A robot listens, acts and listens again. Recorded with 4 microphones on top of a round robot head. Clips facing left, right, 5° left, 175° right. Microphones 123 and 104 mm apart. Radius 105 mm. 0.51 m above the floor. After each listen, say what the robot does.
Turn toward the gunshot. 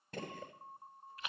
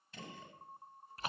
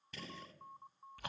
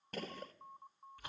Turn 135° left.
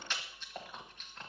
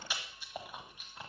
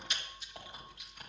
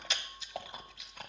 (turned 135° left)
I heard a gunshot from this way, but can't make it out now.